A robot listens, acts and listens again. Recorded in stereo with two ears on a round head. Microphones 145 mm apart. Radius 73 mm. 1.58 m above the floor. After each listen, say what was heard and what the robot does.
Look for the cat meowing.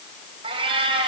The cat meowing: about 35° right or 145° right. Turn 35° right.
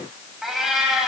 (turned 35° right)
Facing the cat meowing.